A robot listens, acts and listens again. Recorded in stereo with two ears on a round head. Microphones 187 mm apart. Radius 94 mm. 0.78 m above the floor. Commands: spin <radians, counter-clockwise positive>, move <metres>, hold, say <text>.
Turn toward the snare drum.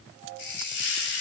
hold
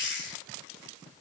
hold
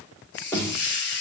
spin 0.52
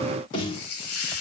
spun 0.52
spin 2.36
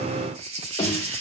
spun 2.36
spin 0.26
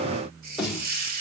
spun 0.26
say Found it: a snare drum, straight ahead.